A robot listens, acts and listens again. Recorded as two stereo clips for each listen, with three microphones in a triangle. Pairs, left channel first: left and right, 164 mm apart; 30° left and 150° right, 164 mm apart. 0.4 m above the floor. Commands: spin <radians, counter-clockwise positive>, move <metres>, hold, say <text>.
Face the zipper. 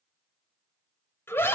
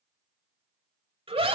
hold
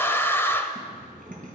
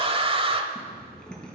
spin -0.96
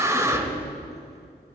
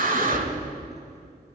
hold
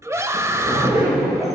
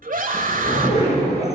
spin -0.35
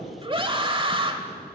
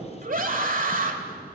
hold
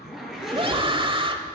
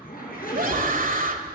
say Facing the zipper, over 4 m away.